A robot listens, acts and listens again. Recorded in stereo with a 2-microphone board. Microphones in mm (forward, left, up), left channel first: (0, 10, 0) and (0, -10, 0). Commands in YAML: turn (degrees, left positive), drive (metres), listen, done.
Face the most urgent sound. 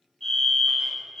turn: 30
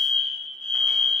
turn: 135
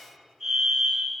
done: "Facing the fire alarm, over 4 m away."